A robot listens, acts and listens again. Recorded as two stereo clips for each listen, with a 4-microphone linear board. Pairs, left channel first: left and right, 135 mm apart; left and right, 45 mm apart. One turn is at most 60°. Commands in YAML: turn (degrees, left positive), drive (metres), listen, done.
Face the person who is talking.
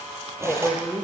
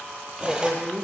turn: 30
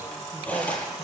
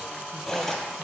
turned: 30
listen: true
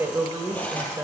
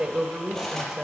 turn: -20
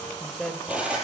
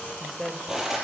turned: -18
done: "Found it: a woman speaking, straight ahead, 2 to 4 m away."